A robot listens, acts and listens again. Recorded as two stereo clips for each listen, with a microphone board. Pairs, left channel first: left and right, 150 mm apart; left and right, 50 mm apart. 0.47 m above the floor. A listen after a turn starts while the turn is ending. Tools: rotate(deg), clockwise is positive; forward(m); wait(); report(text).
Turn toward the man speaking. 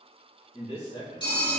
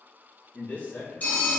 rotate(-40)
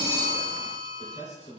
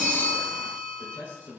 rotate(-40)
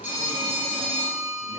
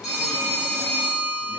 wait()
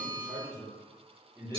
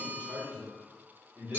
rotate(25)
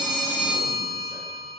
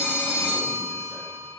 wait()
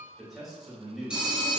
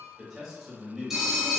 report("Found it: a man speaking, straight ahead, 2 to 4 m away.")